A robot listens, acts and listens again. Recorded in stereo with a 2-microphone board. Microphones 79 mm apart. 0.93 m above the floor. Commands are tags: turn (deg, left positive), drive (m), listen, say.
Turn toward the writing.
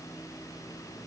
<listen/>
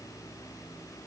<listen/>
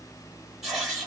<turn deg="-30"/>
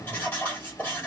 <turn deg="25"/>
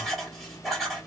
<say>Found it: writing, straight ahead.</say>